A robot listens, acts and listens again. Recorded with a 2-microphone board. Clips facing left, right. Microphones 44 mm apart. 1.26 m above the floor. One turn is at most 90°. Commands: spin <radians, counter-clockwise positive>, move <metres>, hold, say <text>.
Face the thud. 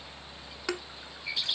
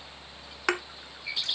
spin -0.96
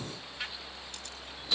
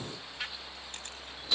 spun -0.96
hold
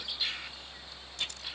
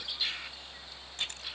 say I heard a thud, but can't make it out now. It was about straight ahead or 70° right.